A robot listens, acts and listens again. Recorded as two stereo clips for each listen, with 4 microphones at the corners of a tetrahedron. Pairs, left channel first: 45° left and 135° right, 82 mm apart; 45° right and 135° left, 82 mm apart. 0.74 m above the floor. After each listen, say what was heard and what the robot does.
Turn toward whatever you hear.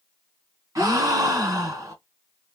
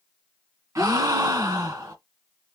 The gasp: straight behind. Turn 180° left.
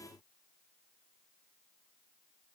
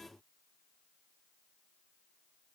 I heard a gasp from this way, but can't make it out now.